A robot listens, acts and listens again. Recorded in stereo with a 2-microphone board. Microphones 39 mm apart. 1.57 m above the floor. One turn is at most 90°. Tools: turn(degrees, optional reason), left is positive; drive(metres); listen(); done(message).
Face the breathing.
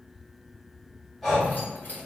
turn(degrees=30)
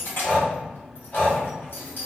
turn(degrees=90, reason="So it is at 140° left.")
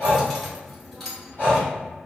turn(degrees=55, reason="The breathing is now 55° left.")
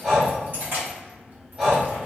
turn(degrees=-15, reason="The breathing is now 15° right.")
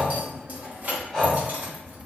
done("Found it: breathing, straight ahead, 1 to 2 m away.")